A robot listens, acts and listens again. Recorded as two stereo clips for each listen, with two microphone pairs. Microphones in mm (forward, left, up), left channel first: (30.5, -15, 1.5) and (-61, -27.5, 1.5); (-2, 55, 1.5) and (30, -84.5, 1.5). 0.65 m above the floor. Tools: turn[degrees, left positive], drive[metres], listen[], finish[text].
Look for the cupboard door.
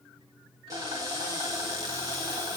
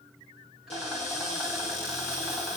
Thought: The cupboard door: 140° left.
Action: turn[140]
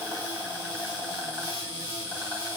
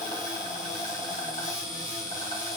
Thought: The cupboard door is now 10° left.
Action: turn[10]
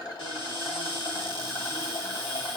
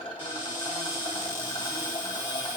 Action: finish[Found it: a cupboard door, straight ahead.]